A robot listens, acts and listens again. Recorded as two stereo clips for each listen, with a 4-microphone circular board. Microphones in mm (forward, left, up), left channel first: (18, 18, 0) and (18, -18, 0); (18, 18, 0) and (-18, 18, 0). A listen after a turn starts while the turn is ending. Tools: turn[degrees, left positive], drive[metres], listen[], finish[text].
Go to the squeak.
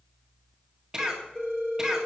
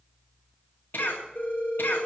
Action: listen[]
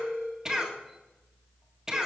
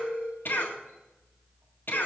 Action: listen[]
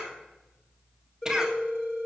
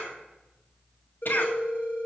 Action: finish[I can't make out a squeak to turn to.]